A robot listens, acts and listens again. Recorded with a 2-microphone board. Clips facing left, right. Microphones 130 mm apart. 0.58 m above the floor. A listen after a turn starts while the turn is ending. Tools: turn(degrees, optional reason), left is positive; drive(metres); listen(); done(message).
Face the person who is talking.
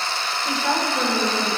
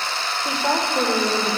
turn(degrees=-30, reason="The woman speaking: about 30° right or 150° right.")
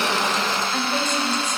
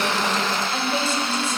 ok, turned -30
done("Found it: a woman speaking, straight ahead.")